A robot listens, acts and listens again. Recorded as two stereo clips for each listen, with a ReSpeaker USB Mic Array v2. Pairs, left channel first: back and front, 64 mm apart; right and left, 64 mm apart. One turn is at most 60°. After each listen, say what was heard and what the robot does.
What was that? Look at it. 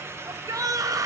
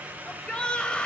The shout: 20° right. Turn 20° right.
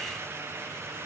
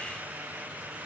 Keep listening.
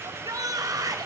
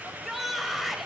Facing the shout.